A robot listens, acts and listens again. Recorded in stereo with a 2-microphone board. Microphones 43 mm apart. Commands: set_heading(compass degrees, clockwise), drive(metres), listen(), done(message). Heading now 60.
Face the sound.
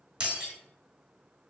set_heading(80)
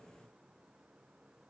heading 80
listen()
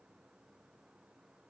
done("I heard breaking glass, but can't make it out now. It was about straight ahead or 140° right.")